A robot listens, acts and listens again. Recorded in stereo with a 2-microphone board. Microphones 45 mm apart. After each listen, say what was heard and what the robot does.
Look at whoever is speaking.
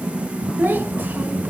The child speaking: about 45° right or 135° right. Turn 45° right.
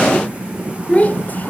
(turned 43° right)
So it is at 35° left. Turn 35° left.
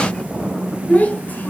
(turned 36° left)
The child speaking is now 35° left. Turn 35° left.
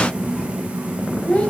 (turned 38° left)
The child speaking is now 25° left. Turn 25° left.
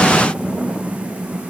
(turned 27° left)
Keep listening.
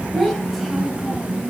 Facing the child speaking, 2 to 4 m away.